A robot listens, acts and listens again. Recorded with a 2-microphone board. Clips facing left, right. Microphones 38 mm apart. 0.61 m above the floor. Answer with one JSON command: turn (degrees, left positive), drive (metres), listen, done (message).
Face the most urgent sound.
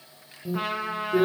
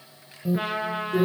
{"turn": -20}
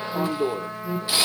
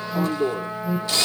{"done": "Found it: an alarm, straight ahead, 1 to 2 m away."}